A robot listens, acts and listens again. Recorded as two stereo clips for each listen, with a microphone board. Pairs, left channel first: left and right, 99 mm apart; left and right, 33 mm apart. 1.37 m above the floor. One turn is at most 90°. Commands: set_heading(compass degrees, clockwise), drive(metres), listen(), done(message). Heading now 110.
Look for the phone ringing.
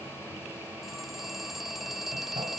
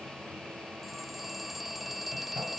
set_heading(80)
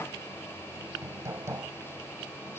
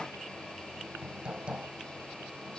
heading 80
listen()
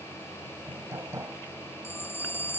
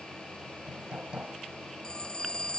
set_heading(350)
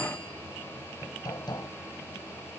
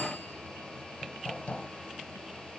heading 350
set_heading(285)
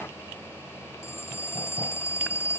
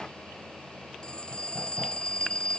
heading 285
set_heading(255)
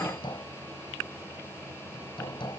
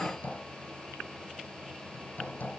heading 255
listen()
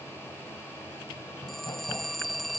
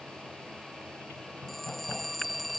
done("Found it: a phone ringing, straight ahead.")